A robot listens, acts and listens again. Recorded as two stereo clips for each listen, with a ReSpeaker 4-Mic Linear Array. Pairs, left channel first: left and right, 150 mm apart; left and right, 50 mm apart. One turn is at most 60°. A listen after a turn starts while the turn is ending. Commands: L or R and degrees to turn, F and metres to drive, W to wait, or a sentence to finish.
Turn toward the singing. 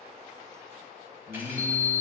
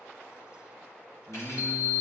L30
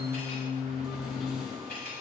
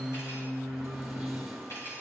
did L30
L60
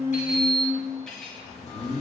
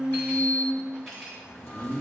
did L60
L45
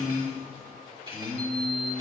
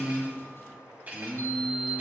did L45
L10
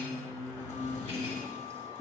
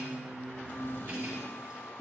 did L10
Found it: singing, straight ahead.